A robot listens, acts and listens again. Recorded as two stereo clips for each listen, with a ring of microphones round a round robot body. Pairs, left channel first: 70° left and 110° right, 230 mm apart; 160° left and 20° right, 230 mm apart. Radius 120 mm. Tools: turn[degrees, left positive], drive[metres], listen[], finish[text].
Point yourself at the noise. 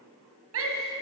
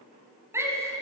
Thought: The shout: 100° right.
Action: turn[-100]
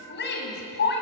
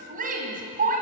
Thought: The shout is now 30° left.
Action: turn[30]
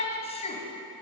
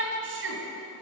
Action: finish[Facing the shout.]